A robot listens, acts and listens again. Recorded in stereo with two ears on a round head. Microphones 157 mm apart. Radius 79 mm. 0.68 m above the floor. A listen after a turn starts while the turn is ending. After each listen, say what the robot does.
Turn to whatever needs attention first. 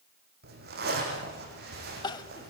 Turn 25° left.
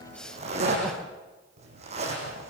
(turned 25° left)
Keep listening.
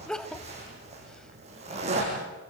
Facing the crying.